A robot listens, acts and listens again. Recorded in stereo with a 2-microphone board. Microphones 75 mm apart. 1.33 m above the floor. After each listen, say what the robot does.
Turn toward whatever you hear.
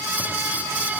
Keep listening.
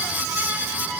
Keep listening.
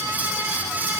I can't make out anything to turn to.